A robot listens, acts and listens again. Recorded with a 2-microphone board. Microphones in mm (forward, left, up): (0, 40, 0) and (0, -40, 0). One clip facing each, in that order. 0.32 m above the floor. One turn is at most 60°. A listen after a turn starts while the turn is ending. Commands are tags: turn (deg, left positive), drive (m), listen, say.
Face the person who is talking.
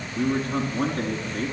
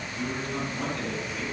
<turn deg="40"/>
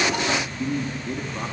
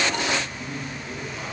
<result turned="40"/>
<turn deg="60"/>
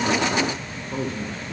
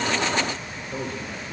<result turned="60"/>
<turn deg="40"/>
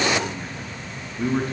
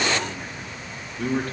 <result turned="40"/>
<turn deg="20"/>
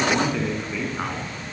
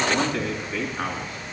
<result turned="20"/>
<say>Found it: a man speaking, straight ahead.</say>